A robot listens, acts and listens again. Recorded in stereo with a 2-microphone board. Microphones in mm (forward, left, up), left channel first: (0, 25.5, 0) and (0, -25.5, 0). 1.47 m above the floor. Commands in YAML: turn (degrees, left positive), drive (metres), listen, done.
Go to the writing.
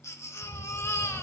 turn: -35
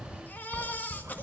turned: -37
turn: -105
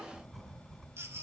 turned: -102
drive: 1.0
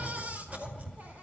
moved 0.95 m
turn: -10
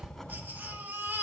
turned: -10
drive: 1.0
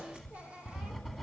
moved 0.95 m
drive: 1.0
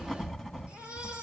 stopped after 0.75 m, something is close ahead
turn: -10
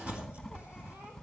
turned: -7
done: "Arrived at the writing, straight ahead."